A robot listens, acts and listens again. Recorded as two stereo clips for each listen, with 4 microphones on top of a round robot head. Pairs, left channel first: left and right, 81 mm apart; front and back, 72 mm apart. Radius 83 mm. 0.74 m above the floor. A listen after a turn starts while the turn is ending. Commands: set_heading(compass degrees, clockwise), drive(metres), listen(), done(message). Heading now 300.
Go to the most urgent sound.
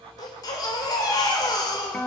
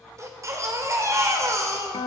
set_heading(165)
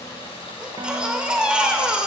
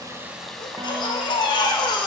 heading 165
set_heading(180)
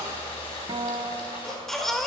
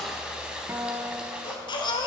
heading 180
drive(1.0)
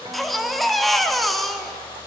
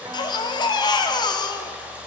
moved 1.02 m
drive(1.0)
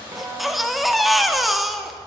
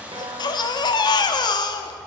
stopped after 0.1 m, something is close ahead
done("I am next to the baby crying.")